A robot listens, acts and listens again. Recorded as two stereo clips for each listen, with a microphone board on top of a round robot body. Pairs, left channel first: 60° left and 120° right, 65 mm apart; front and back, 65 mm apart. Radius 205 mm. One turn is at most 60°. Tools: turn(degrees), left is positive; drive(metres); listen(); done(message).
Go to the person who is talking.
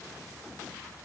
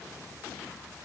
listen()
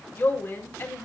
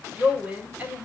turn(degrees=60)
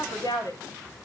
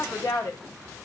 turn(degrees=40)
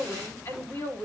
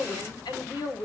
turn(degrees=10)
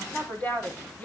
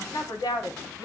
drive(metres=1.0)
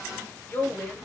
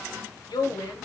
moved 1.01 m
drive(metres=1.0)
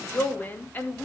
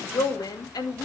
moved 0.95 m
drive(metres=1.0)
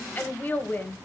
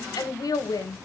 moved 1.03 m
drive(metres=1.0)
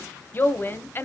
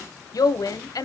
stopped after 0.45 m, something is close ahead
done("I am next to the woman speaking.")